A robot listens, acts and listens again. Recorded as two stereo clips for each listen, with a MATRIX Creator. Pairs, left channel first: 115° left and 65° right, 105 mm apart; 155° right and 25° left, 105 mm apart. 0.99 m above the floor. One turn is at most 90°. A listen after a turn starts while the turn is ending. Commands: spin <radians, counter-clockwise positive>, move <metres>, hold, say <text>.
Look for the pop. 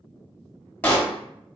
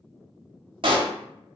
spin 0.70
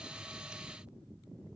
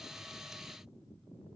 say I heard a pop from this way, but can't make it out now.